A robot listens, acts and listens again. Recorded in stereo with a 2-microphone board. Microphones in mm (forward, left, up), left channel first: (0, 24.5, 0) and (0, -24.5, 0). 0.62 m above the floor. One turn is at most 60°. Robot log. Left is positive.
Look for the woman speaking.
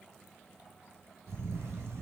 cmd idle
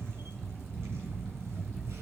cmd idle
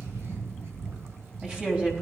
note: The woman speaking: about 25° right or 155° right.
cmd yaw -25
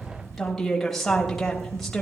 end: Facing the woman speaking, 2 to 4 m away.